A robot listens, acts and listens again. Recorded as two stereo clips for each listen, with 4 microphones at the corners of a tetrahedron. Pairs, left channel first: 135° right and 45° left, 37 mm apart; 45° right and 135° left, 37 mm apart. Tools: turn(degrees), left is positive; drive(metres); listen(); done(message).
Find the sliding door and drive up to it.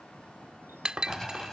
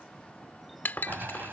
turn(degrees=150)
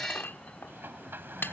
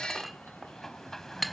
turn(degrees=35)
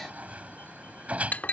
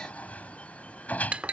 drive(metres=1.0)
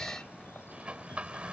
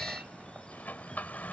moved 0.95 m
turn(degrees=-10)
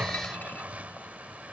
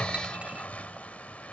drive(metres=1.0)
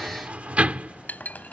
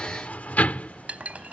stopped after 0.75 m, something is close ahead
done("Arrived at the sliding door, straight ahead.")